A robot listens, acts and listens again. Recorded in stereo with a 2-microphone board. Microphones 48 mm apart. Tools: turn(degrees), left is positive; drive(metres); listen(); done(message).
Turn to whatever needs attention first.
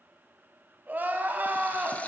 turn(degrees=-45)
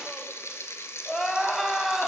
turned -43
done("Facing the crying, under 1 m away.")